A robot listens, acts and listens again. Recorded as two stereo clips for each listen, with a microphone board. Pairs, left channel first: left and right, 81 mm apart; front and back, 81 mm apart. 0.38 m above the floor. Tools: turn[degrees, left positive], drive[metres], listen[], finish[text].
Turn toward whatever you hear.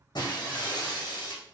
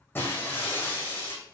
Thought: The breaking glass: 60° left.
Action: turn[60]
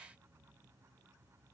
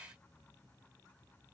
Action: finish[I heard breaking glass from this way, but can't make it out now.]